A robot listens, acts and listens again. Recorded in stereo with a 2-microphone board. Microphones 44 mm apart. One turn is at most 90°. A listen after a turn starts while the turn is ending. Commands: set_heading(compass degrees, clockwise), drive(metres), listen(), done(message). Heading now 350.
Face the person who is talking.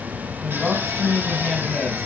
set_heading(320)
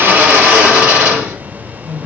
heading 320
set_heading(230)
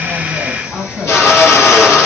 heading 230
set_heading(195)
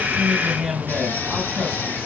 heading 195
set_heading(205)
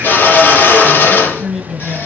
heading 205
done("Facing the man speaking.")